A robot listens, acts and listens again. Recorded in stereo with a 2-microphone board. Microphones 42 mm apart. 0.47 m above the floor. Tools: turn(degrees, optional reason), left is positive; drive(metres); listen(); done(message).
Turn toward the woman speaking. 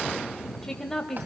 turn(degrees=30)
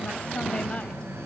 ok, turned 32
listen()
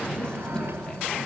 listen()
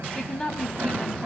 turn(degrees=15, reason="The woman speaking: about 15° left or 165° left.")
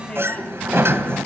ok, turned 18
listen()
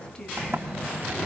listen()
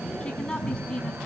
done("I heard a woman speaking, but can't make it out now. It was about 5° right or 145° left.")